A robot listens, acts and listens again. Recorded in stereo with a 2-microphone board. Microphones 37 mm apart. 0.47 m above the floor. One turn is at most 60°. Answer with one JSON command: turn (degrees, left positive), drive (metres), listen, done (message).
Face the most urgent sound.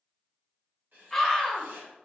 {"turn": 30}
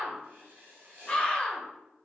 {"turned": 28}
{"turn": 60}
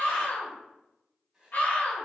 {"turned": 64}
{"turn": 60}
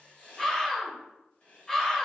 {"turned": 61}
{"turn": 20}
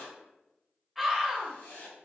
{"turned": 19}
{"done": "Facing the scream."}